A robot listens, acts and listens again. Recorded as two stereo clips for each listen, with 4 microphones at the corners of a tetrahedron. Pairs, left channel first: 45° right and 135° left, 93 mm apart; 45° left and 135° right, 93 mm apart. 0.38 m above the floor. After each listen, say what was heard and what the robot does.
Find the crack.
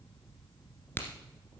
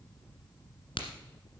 The crack: 25° left. Turn 25° left.
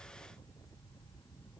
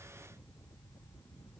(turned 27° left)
I heard a crack from this way, but can't make it out now.